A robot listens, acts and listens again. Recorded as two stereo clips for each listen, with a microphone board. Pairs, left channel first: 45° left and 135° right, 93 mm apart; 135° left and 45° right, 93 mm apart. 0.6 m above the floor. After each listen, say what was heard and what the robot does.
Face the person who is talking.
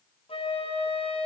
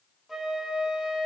Keep listening.
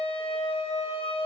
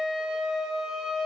Keep listening.
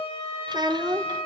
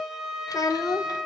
The child speaking: 175° right. Turn 175° right.
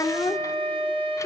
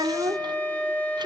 The child speaking is now 10° right. Turn 10° right.
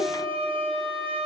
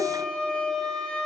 Keep listening.
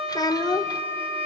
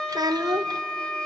Found it: a child speaking, straight ahead.